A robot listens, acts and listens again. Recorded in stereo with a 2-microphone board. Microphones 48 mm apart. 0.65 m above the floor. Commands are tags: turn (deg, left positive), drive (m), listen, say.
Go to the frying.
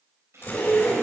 <turn deg="-75"/>
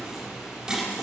<listen/>
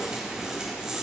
<listen/>
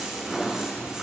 <say>I heard frying, but can't make it out now. It was about straight ahead or 30° right. I did not reach it.</say>